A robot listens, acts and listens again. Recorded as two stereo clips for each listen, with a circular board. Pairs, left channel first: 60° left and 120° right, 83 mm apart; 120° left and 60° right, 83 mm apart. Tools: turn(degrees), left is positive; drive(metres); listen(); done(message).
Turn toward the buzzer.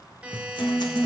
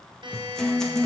turn(degrees=-45)
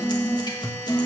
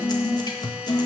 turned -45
listen()
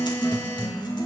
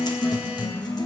listen()
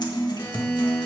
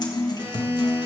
done("Facing where the buzzer came from. I can't hear it now.")